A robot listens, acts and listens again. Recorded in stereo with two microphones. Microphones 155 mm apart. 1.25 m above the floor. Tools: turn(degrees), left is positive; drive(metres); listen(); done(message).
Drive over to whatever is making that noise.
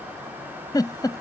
turn(degrees=25)
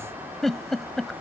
drive(metres=1.0)
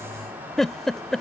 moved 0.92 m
drive(metres=1.0)
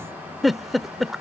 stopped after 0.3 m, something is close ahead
done("I am next to the giggle.")